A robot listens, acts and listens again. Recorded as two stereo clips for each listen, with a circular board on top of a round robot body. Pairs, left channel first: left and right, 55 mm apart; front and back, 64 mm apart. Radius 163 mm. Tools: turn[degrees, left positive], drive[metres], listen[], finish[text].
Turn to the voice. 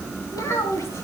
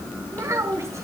Thought: The child speaking: 135° left.
Action: turn[135]
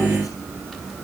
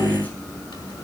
Action: listen[]
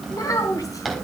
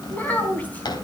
Thought: The child speaking is now 70° left.
Action: turn[70]
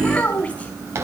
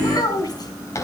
Thought: The child speaking is now 25° left.
Action: turn[25]
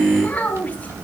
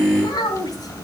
Thought: The child speaking is now 25° left.
Action: turn[25]
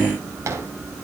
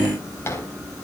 Action: listen[]
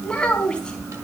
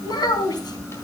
Thought: The child speaking is now 15° left.
Action: turn[15]
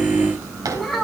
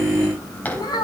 Action: finish[Facing the child speaking.]